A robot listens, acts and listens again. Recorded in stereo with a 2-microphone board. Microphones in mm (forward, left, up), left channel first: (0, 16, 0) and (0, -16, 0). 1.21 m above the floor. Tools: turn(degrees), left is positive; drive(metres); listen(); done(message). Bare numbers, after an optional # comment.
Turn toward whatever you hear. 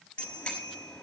# The bicycle bell: about 35° left or 145° left.
turn(35)
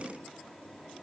listen()
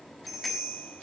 done("Found it: a bicycle bell, straight ahead.")